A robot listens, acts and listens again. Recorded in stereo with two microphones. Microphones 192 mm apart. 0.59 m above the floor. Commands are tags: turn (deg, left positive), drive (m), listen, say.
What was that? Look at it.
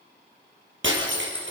<turn deg="-90"/>
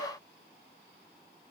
<say>Facing where the breaking glass came from. I can't hear it now.</say>